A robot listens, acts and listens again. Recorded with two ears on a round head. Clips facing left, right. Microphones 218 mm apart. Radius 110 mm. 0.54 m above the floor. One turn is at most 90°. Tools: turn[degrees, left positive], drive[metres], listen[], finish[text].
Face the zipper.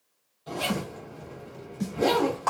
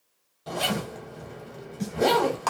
Thought: The zipper: about 65° right or 115° right.
Action: turn[-65]
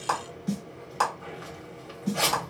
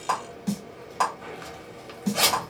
Thought: So it is at 45° right.
Action: turn[-45]
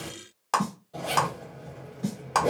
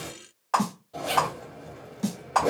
Action: finish[Found it: a zipper, straight ahead.]